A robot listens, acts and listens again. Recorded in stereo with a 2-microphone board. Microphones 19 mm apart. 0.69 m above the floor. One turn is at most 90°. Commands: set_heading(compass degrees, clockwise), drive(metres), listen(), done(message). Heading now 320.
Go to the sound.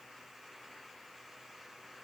listen()
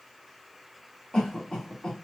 set_heading(270)
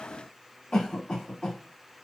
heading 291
set_heading(201)
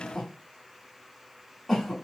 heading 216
set_heading(201)
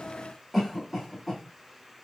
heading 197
drive(1.0)
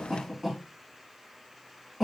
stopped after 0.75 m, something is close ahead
set_heading(212)
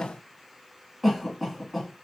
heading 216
done("Arrived at the cough, straight ahead.")